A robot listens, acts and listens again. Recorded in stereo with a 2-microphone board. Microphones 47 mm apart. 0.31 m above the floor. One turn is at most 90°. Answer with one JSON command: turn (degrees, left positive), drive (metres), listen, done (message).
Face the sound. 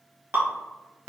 {"turn": -60}
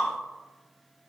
{"listen": true}
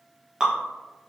{"turn": -20}
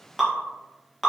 {"done": "Found it: dripping, straight ahead."}